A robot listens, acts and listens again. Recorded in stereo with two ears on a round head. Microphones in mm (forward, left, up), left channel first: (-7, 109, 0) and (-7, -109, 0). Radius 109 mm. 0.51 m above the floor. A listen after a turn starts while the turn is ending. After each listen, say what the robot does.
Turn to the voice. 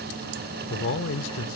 Turn 55° left.
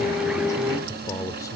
Turn 15° left.
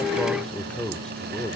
Found it: a man speaking, straight ahead.